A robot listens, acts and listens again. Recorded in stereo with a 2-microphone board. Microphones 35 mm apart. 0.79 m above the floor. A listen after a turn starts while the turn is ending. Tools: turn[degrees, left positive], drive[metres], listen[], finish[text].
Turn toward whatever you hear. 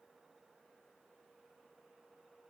Action: listen[]
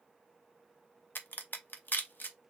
Thought: The crack: about 65° left or 115° left.
Action: turn[65]
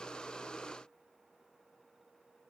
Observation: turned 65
Action: listen[]
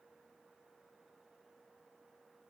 Action: finish[I heard a crack, but can't make it out now. It was about straight ahead or 50° left.]